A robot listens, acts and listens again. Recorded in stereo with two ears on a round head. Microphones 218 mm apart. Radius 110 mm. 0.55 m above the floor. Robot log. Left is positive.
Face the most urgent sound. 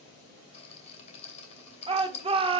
note: The shout: about 25° right or 155° right.
cmd yaw -25
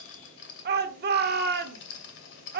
note: So it is at 125° right.
cmd yaw -125
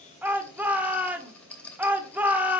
note: The shout is now 10° right.
cmd yaw -10
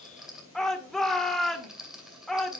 end: Facing the shout.